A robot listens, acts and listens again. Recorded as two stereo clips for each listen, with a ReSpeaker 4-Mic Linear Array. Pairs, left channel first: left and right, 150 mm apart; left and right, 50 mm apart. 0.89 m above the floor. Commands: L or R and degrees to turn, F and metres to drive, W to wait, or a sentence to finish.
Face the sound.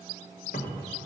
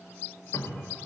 L90
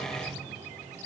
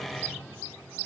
W
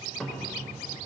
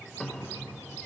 Facing the cupboard door.